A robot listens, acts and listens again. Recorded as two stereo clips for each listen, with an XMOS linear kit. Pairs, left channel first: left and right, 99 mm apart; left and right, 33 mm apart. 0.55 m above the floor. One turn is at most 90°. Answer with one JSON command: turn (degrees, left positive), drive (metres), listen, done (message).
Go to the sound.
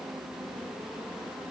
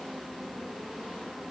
{"listen": true}
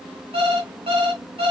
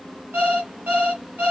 {"turn": -90}
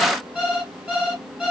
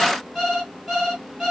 {"turn": -10}
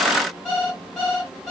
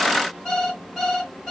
{"drive": 1.0}
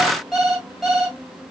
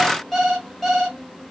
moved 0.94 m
{"drive": 1.0}
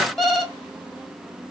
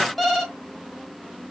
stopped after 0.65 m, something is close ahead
{"done": "I am next to the alarm clock."}